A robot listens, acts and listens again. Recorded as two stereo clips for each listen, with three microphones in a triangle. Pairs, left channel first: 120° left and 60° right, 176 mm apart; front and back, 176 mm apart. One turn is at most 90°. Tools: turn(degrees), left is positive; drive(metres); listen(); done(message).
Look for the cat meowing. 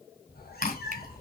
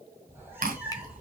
turn(degrees=90)
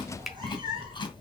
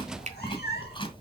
done("Found it: a cat meowing, straight ahead.")